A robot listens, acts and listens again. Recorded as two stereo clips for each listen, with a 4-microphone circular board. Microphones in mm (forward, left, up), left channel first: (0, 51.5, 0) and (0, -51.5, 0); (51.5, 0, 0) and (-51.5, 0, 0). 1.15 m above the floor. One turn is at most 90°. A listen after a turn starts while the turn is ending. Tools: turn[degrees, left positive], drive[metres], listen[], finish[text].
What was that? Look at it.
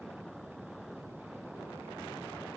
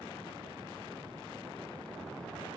Action: listen[]
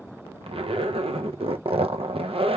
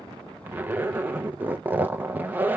Thought: The zipper: 105° right.
Action: turn[-90]
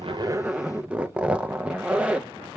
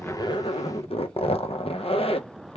Thought: The zipper is now 10° right.
Action: turn[-10]
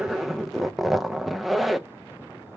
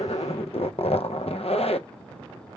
Action: finish[Facing the zipper.]